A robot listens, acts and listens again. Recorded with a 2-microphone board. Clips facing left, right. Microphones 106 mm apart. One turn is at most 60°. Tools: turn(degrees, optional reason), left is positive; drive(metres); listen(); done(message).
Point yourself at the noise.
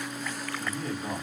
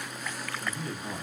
turn(degrees=60, reason="The man speaking: about 60° left or 120° left.")
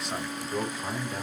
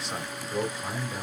done("Facing the man speaking, 2 to 4 m away.")